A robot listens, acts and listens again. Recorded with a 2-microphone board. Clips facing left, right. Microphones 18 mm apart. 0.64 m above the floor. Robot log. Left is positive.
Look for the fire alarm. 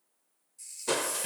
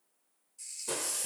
cmd idle
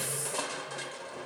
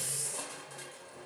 cmd idle
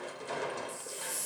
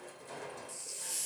end: I can't make out a fire alarm to turn to.